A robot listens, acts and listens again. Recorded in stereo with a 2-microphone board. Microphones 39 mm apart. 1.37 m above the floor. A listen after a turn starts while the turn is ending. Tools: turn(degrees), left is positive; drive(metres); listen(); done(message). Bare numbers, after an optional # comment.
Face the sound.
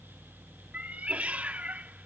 # The cat meowing: about 35° right or 145° right.
turn(-35)
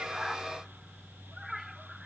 done("Facing the cat meowing.")